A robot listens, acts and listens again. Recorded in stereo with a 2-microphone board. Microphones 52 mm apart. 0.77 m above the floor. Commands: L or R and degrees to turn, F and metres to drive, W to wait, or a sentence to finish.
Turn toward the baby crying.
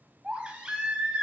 R20
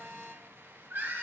R140
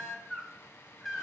Found it: a baby crying, straight ahead, 1 to 2 m away.